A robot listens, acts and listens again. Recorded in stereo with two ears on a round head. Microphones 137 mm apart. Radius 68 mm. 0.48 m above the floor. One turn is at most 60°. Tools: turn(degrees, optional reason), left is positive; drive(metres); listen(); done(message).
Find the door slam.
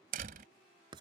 turn(degrees=-60, reason="The door slam: about 60° right or 120° right.")
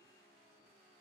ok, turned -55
listen()
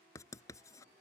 done("I heard a door slam, but can't make it out now. It was about 5° right or 65° right.")